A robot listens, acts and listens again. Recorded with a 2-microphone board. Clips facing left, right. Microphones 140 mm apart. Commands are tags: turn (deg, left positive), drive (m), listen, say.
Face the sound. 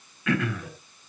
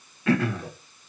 <turn deg="-35"/>
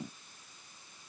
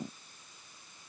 <listen/>
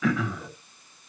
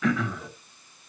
<say>Facing the throat clearing.</say>